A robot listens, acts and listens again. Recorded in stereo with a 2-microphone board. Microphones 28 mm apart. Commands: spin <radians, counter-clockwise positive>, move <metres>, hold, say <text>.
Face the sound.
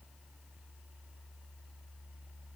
hold
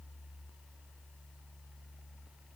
hold
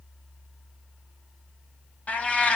spin 0.96
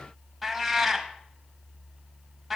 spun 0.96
say Facing the cat meowing.